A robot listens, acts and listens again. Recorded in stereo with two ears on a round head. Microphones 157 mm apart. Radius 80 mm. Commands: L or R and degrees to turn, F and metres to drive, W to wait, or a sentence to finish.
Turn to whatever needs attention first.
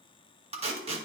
W
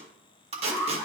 R30
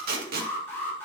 L15
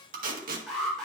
Facing the alarm, over 4 m away.